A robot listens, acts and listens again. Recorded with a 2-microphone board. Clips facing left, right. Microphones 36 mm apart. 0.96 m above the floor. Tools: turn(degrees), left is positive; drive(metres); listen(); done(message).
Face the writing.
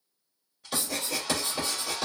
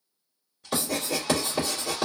turn(degrees=-20)
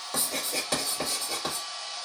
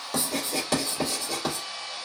done("Found it: writing, straight ahead, 2 to 4 m away.")